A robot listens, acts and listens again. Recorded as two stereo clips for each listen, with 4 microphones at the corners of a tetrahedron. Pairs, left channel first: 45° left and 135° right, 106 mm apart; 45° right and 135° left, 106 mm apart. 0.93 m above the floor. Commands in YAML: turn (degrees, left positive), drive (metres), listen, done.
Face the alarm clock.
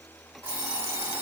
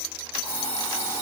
turn: -70
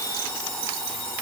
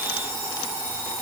done: "Found it: an alarm clock, straight ahead, 2 to 4 m away."